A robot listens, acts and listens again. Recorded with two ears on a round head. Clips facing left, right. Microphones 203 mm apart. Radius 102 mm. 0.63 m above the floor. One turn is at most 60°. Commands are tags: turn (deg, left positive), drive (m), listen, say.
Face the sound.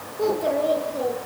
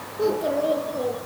<turn deg="30"/>
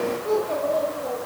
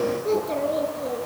<turn deg="-25"/>
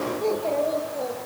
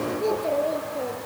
<say>Found it: a child speaking, straight ahead, over 4 m away.</say>